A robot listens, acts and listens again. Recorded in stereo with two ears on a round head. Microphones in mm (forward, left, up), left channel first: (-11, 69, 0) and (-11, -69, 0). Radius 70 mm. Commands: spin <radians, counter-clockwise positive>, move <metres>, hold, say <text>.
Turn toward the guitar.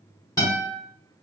spin 0.35
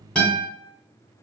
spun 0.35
say Facing the guitar.